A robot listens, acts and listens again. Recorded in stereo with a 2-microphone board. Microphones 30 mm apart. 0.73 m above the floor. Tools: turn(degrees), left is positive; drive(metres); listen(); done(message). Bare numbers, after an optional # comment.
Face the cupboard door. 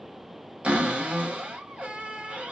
# The cupboard door: about 55° right or 125° right.
turn(-55)
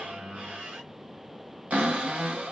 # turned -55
# So it is at 70° right.
turn(-70)
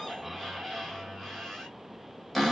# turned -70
done("Facing the cupboard door.")